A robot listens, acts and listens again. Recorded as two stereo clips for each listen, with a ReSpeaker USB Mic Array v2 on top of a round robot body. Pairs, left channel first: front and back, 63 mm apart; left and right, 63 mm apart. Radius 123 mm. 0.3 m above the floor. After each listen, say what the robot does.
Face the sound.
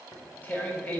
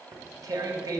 Turn 65° right.
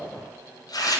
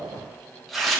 Facing the tearing paper.